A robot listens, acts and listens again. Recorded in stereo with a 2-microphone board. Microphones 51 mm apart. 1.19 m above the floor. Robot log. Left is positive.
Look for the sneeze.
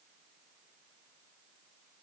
cmd idle
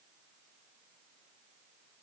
cmd idle
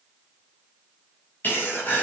note: The sneeze: about 40° left or 140° left.
cmd yaw +40
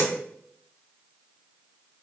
cmd idle
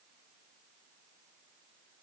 end: I heard a sneeze, but can't make it out now. It was about straight ahead or 100° left.